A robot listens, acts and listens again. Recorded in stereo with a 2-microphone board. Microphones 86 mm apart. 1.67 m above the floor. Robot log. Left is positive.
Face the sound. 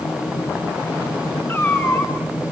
note: The cat meowing: about 30° left or 150° left.
cmd yaw +30
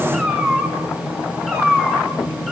end: Facing the cat meowing.